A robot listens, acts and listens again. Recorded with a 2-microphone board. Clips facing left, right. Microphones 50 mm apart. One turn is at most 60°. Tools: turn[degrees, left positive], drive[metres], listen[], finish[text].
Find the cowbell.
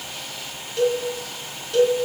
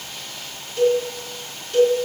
Action: turn[30]
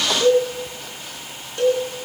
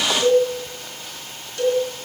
Thought: So it is at 145° left.
Action: turn[60]
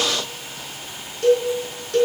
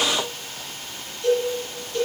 Thought: The cowbell is now 85° left.
Action: turn[60]
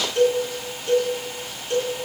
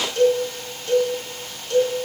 Thought: The cowbell is now 20° left.
Action: turn[20]
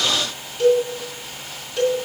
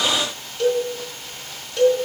Action: finish[Found it: a cowbell, straight ahead.]